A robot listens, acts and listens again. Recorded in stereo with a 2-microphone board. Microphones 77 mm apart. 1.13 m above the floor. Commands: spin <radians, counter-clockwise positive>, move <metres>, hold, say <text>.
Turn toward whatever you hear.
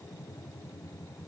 hold
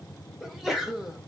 spin -0.52
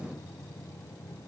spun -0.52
hold
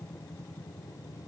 say I heard a sneeze, but can't make it out now. It was about 25° left or 145° right.